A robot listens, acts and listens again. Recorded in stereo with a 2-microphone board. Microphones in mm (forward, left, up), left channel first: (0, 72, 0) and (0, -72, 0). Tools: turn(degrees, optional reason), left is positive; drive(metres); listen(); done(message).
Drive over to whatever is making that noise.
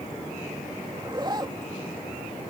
turn(degrees=-30, reason="The zipper: about 30° right or 150° right.")
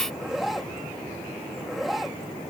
drive(metres=1.0)
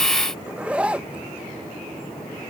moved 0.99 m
turn(degrees=-10, reason="The zipper is now 10° right.")
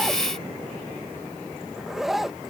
drive(metres=1.0)
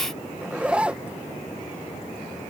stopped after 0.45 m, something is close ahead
turn(degrees=-10, reason="The zipper is now 10° right.")
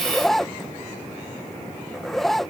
done("I am next to the zipper.")